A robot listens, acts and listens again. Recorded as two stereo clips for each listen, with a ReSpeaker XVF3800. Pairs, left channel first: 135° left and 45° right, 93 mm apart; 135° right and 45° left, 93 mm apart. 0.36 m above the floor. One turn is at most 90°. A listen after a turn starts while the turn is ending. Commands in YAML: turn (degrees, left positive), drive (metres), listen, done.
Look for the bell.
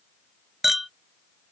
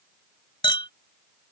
listen: true
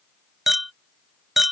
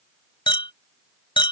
listen: true
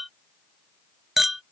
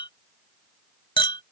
done: "I can't make out a bell to turn to."